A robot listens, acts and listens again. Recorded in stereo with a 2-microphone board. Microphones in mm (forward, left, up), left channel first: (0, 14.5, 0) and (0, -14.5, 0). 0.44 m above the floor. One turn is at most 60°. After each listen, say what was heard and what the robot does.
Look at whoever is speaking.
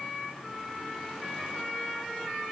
Keep listening.
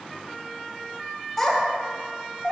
Turn 30° left.
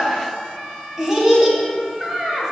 So it is at 20° right. Turn 20° right.
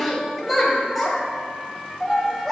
Facing the child speaking.